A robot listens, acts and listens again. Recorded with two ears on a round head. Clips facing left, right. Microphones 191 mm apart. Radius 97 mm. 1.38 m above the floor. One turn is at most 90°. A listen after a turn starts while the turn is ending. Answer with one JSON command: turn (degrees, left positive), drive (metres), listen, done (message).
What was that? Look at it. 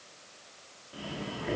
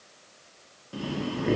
{"turn": -60}
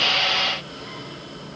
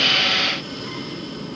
{"turn": -55}
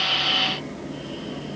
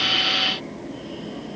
{"done": "Facing the breathing."}